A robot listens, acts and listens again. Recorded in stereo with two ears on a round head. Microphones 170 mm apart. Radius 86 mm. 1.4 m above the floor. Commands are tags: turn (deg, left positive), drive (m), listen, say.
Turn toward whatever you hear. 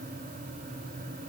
<listen/>
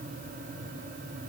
<listen/>
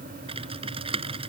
<turn deg="-30"/>
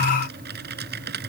<turn deg="-120"/>
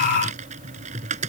<turn deg="-35"/>
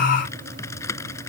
<turn deg="15"/>
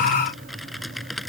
<say>Facing the typing on a keyboard.</say>